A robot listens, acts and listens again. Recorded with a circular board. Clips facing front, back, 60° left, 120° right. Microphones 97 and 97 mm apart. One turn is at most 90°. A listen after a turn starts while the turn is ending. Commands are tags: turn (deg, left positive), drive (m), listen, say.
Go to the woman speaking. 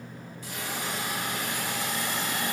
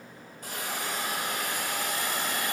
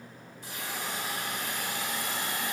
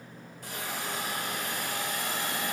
<listen/>
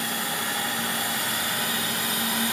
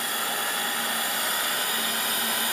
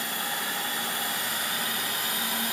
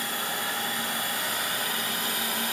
<listen/>
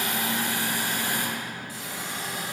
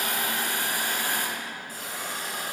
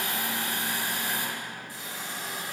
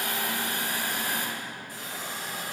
<say>I can't make out a woman speaking to turn to.</say>